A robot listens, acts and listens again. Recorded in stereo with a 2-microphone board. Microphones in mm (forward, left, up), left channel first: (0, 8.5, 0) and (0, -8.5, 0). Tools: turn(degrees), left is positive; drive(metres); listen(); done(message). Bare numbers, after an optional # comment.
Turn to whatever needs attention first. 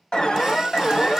# The alarm: about 60° left or 120° left.
turn(60)
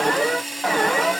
# So it is at 40° left.
turn(40)
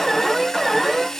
done("Found it: an alarm, straight ahead, 1 to 2 m away.")